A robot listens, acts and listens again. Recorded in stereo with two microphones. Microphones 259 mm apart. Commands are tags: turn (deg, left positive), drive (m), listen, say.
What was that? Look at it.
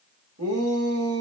<turn deg="-60"/>
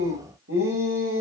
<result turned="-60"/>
<turn deg="-55"/>
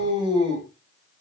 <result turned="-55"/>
<turn deg="-20"/>
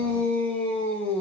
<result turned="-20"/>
<say>Facing the shout.</say>